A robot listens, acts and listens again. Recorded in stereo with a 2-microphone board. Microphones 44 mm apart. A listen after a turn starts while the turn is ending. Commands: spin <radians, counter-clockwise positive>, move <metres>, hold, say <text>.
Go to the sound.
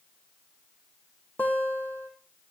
spin 0.79
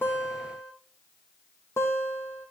spin 1.57
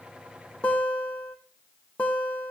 spin 0.44
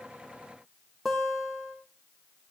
move 1.0
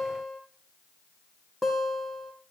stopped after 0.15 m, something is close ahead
say Blocked. The guitar is further on, straight ahead.